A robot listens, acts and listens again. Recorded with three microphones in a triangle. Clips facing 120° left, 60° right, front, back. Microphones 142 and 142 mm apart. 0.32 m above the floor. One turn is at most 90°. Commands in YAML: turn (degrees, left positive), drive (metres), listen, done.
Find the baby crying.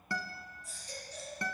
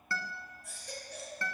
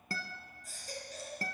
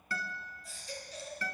turn: -40
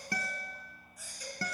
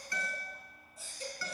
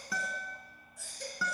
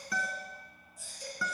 done: "Facing the baby crying."